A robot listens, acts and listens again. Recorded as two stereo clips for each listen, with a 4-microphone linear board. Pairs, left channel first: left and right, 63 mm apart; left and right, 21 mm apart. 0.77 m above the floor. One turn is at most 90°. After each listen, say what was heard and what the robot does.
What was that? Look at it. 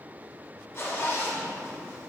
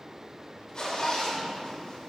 The zipper: about 40° left or 140° left. Turn 40° left.
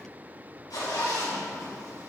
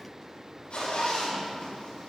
So it is at 100° left. Turn 90° left.
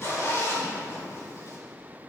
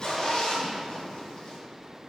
The zipper is now 45° left. Turn 45° left.
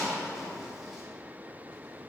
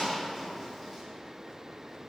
Found it: a zipper, straight ahead, 2 to 4 m away.